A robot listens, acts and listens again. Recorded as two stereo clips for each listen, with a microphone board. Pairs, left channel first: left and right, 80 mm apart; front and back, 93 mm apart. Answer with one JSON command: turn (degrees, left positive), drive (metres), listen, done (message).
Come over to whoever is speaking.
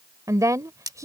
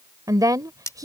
{"turn": -135}
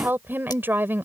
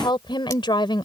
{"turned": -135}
{"turn": -30}
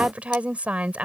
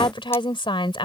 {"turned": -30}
{"turn": -15}
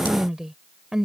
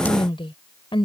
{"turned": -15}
{"drive": 1.0}
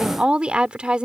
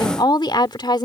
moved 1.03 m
{"turn": -15}
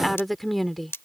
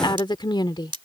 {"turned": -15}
{"drive": 1.0}
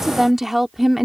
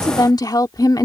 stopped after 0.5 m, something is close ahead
{"done": "I am next to the woman speaking."}